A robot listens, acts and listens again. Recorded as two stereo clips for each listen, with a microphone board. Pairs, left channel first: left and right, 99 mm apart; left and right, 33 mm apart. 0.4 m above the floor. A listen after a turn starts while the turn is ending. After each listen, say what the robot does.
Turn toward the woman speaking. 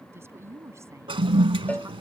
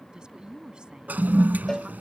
Turn 25° right.
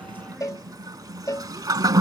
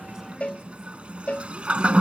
Keep listening.
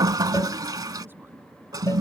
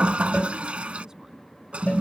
Keep listening.
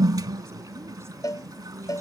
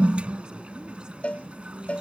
Turn 30° right.
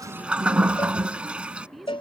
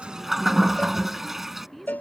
Found it: a woman speaking, straight ahead.